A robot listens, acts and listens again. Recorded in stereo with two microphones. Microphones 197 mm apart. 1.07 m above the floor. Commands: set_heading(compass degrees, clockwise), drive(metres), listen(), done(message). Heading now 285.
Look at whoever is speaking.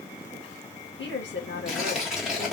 set_heading(215)
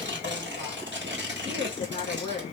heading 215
set_heading(190)
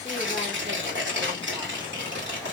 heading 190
listen()
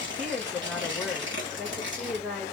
done("Found it: a woman speaking, straight ahead.")